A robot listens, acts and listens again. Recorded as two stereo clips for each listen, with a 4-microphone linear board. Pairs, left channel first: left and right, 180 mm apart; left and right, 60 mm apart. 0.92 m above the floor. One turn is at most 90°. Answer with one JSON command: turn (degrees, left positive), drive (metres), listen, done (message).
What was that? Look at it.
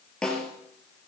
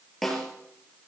{"turn": 30}
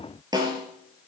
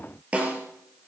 {"turn": -25}
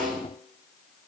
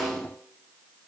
{"done": "Found it: a snare drum, straight ahead, 2 to 4 m away."}